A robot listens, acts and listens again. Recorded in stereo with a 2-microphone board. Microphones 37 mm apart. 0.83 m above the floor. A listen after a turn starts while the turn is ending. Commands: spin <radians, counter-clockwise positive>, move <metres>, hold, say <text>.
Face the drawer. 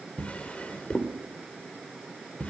spin 0.61
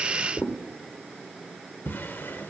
spin 1.92
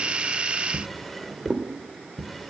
say Facing the drawer, 1 to 2 m away.